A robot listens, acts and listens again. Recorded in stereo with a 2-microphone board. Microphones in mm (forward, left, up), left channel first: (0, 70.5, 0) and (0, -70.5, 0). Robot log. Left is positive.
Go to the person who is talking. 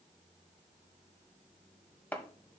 cmd idle
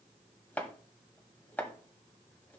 cmd idle
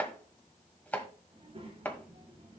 note: The child speaking: about 45° right or 135° right.
cmd yaw -45
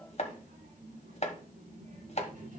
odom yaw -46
note: So it is at 90° right.
cmd yaw -90
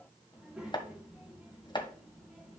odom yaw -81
cmd fwd 1.0
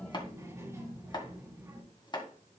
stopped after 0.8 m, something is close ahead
note: The child speaking is now 20° right.
cmd yaw -20
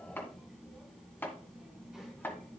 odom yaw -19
end: Something is in my way. I am facing the child speaking but have not reached it.